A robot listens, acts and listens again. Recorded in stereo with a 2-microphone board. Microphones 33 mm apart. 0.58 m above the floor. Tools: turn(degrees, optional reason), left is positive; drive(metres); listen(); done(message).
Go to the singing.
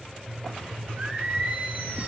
turn(degrees=-70, reason="The singing: about 70° right or 110° right.")
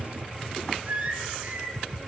turn(degrees=-40, reason="So it is at 40° right.")
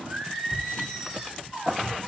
drive(metres=1.0)
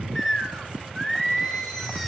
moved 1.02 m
drive(metres=1.0)
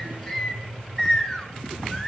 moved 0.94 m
turn(degrees=15, reason="The singing is now 15° left.")
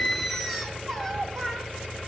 drive(metres=1.0)
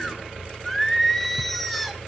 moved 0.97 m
drive(metres=1.0)
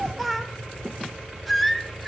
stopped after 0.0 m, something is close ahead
done("I am next to the singing.")